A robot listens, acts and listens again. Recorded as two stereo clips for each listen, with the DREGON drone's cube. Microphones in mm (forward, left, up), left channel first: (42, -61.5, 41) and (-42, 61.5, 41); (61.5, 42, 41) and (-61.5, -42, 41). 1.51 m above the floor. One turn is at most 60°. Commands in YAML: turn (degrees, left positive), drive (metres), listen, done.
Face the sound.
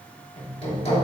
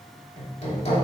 turn: -10
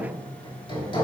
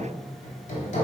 done: "Facing the hammering."